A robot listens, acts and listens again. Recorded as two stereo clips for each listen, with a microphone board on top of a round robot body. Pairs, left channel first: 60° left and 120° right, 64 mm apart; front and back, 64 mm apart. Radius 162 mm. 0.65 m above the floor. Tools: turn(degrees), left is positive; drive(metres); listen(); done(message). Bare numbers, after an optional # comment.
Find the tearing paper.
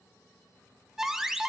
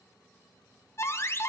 listen()
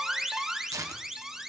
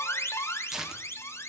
# The tearing paper: 100° right.
turn(-100)
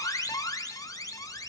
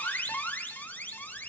listen()
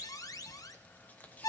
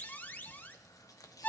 listen()
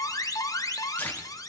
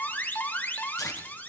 done("Facing where the tearing paper came from. I can't hear it now.")